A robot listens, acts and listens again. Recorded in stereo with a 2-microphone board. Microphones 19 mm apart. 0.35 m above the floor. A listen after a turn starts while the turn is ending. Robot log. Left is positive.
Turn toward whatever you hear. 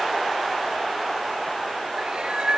note: The cat meowing: about 55° right or 125° right.
cmd yaw -55
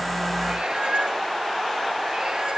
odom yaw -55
note: So it is at 50° right.
cmd yaw -50
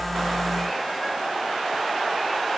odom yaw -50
cmd idle
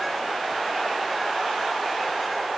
cmd idle
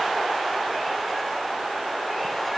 end: Facing where the cat meowing came from. I can't hear it now.